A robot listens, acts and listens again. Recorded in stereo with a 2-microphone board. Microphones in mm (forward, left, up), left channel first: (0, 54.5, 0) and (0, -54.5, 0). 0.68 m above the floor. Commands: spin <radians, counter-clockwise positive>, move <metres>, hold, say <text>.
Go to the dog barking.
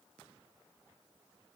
hold
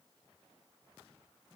hold
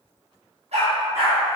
spin -1.57
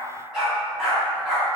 move 1.0
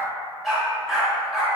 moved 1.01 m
move 1.0
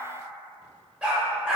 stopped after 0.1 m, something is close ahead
spin -0.17
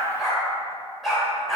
say I am next to the dog barking.